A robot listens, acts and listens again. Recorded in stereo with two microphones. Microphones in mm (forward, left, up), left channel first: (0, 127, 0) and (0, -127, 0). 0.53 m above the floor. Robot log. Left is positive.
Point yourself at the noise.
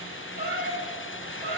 note: The cat meowing: about 45° right or 135° right.
cmd yaw -45
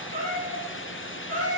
note: So it is at 95° right.
cmd yaw -95
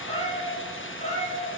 note: The cat meowing is now 30° left.
cmd yaw +30
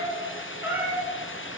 note: The cat meowing is now 10° right.
cmd yaw -10
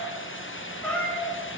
end: Found it: a cat meowing, straight ahead.